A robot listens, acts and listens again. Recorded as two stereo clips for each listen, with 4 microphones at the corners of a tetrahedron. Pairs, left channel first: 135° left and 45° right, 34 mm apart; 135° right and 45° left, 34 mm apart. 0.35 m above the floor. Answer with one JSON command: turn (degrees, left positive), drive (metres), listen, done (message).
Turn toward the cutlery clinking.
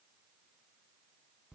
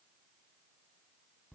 {"listen": true}
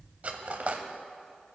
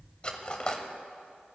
{"turn": -75}
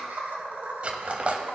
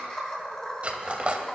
{"done": "Facing the cutlery clinking, under 1 m away."}